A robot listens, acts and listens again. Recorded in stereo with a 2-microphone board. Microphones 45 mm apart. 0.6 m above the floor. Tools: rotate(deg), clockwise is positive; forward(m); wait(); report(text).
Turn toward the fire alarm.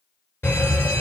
rotate(-55)
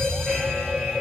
rotate(-10)
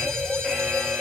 report("Found it: a fire alarm, straight ahead, 2 to 4 m away.")